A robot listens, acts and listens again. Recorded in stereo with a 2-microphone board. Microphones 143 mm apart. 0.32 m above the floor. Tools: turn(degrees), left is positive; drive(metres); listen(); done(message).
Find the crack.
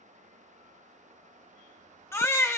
listen()
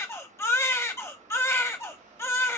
listen()
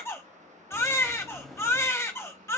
turn(degrees=30)
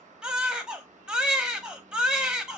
listen()
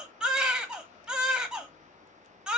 done("I heard a crack, but can't make it out now. It was about 30° right or 150° left.")